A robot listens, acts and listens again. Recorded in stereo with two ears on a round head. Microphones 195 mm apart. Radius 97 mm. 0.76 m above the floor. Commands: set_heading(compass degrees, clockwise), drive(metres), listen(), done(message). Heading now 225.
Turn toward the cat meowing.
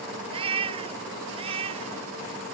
set_heading(250)
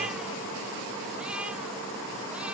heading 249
listen()
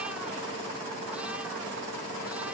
listen()
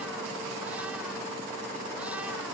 done("I heard a cat meowing, but can't make it out now. It was about straight ahead or 130° right.")